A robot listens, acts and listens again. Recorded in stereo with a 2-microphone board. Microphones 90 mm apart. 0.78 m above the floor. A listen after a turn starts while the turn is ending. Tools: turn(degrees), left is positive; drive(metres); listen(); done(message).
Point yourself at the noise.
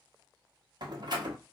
turn(degrees=-55)
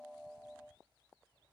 listen()
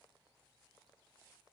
done("I heard a door slam, but can't make it out now. It was about straight ahead or 70° right.")